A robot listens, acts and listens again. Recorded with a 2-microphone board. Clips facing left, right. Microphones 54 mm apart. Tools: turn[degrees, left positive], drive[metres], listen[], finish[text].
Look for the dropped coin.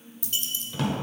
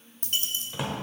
Thought: The dropped coin: about 45° right or 135° right.
Action: turn[-45]
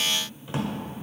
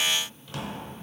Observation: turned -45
Action: listen[]
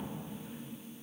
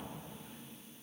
Action: finish[I heard a dropped coin, but can't make it out now. It was about straight ahead or 90° right.]